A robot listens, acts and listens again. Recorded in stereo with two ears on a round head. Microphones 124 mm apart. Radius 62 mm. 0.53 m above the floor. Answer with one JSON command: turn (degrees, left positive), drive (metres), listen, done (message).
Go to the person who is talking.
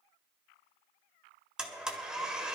{"listen": true}
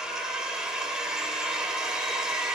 {"listen": true}
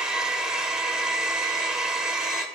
{"done": "I can't make out anyone speaking, only a blender."}